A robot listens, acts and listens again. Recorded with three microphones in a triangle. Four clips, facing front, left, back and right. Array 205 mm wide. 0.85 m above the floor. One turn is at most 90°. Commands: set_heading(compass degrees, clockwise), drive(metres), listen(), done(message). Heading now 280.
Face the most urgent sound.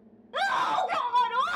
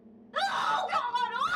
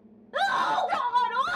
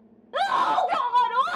set_heading(10)
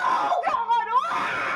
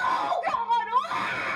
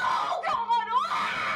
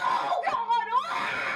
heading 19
done("Facing the scream.")